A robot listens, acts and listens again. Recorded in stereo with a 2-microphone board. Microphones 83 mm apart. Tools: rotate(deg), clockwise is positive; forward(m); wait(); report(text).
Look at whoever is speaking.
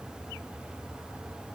wait()
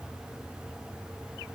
wait()
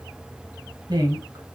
rotate(55)
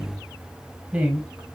rotate(20)
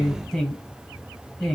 report("Found it: a woman speaking, straight ahead, 1 to 2 m away.")